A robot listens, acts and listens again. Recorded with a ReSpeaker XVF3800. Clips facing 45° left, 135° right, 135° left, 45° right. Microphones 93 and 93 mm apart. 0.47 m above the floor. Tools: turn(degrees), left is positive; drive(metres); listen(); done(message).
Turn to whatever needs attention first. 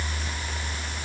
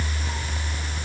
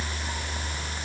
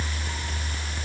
listen()
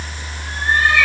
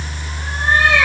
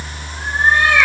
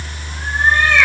listen()
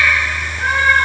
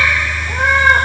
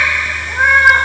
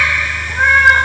done("I can't make out anything urgent to turn to.")